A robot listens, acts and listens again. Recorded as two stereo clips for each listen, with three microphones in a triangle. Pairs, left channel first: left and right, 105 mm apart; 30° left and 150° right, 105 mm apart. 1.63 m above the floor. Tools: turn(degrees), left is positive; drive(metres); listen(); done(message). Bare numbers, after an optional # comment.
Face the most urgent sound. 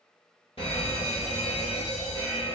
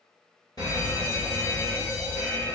# The fire alarm: 80° left.
turn(80)
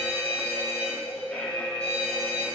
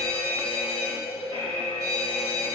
# The fire alarm is now 15° left.
turn(15)
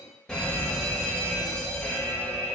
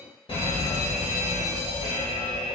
done("Found it: a fire alarm, straight ahead.")